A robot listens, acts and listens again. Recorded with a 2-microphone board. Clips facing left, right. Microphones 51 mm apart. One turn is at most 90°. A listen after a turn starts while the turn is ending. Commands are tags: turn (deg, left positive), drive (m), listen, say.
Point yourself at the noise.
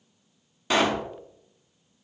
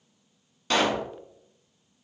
<turn deg="30"/>
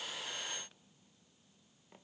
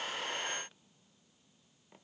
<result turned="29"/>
<listen/>
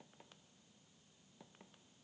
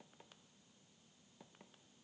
<say>I heard a pop, but can't make it out now. It was about 15° right or 140° left.</say>